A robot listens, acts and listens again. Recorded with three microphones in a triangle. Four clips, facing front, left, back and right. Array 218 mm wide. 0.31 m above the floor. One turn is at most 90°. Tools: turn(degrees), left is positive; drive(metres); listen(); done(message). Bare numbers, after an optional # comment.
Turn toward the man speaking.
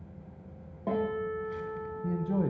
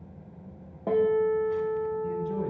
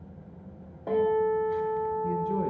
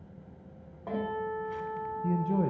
# The man speaking: 50° right.
turn(-50)
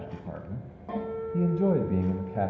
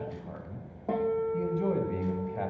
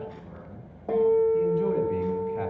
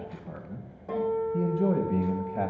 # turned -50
# The man speaking is now 30° right.
turn(-30)
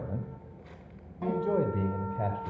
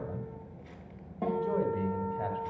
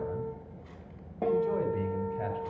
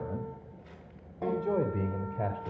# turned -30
# The man speaking is now 55° right.
turn(-55)
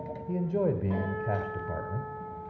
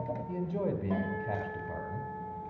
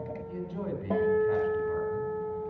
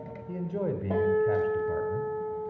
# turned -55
done("Facing the man speaking, 1 to 2 m away.")